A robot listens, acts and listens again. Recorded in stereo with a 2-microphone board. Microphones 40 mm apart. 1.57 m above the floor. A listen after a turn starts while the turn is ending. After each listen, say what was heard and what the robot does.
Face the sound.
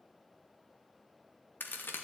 The crack: about 60° left or 120° left. Turn 60° left.
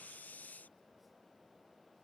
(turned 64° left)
Keep listening.
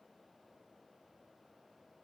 I heard a crack, but can't make it out now. It was about 5° right or 55° left.